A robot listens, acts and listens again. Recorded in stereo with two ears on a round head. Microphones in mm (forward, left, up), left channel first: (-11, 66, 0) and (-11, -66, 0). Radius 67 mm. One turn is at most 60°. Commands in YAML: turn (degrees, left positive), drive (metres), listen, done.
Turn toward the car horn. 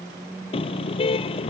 turn: 40
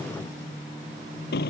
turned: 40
turn: 60
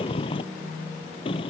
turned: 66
turn: 35
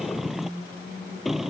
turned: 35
done: "Found it: a car horn, straight ahead."